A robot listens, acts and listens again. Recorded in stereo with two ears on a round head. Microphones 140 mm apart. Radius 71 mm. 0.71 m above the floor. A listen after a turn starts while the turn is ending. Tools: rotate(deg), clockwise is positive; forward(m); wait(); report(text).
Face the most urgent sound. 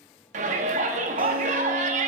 rotate(50)
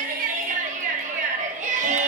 rotate(65)
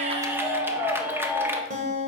rotate(15)
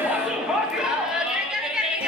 report("Found it: a shout, straight ahead, under 1 m away.")